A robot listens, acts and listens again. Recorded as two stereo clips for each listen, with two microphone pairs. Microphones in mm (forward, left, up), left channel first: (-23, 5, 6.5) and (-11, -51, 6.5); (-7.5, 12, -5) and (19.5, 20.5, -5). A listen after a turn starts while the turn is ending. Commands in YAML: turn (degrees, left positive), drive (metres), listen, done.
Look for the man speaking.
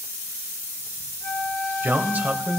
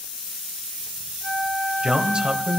turn: -20
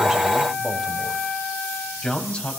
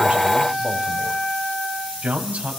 turn: 35
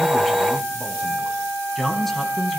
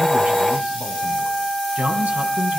turn: 15
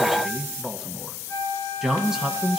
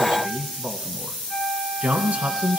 done: "Facing the man speaking, 2 to 4 m away."